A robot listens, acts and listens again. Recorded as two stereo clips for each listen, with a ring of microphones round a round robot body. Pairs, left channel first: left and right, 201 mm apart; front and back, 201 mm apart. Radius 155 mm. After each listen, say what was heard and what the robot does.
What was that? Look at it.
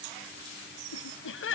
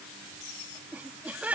The laughter: 100° left. Turn 100° left.
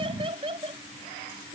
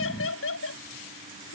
The laughter is now 20° right. Turn 20° right.
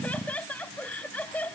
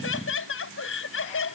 Facing the laughter.